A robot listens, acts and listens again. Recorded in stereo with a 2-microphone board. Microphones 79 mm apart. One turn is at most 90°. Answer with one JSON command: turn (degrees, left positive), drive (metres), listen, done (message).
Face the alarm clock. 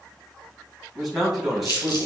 {"listen": true}
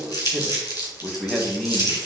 {"listen": true}
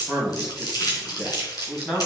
{"done": "I can't make out an alarm clock, only a man speaking and crumpling."}